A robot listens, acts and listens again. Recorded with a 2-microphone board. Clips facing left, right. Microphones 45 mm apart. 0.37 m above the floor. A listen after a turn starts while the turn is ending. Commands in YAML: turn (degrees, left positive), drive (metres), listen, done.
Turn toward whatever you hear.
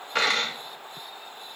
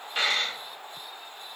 turn: 75
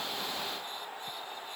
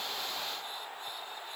listen: true
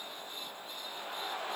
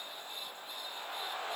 done: "I heard a dropped coin, but can't make it out now. It was about straight ahead or 30° left."